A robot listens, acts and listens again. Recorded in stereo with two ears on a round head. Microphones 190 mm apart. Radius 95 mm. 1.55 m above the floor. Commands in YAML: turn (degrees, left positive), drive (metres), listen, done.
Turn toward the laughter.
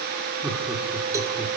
turn: 30
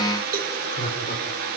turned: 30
turn: 145
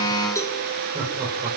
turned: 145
turn: -15
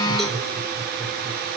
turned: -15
done: "Facing the laughter, over 4 m away."